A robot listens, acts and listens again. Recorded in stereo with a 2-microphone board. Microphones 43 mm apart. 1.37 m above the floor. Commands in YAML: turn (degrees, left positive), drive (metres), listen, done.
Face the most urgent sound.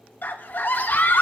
turn: 45
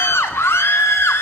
turn: 90
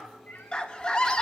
turn: 20
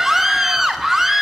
turn: -10
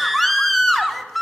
done: "Found it: a scream, straight ahead."